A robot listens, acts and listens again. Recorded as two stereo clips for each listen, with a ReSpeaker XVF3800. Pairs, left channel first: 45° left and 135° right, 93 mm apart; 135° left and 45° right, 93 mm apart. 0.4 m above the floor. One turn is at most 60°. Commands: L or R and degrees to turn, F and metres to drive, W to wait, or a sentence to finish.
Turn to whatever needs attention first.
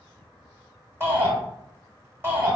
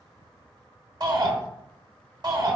R60
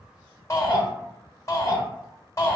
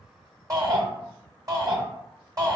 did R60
Found it: a shout, straight ahead.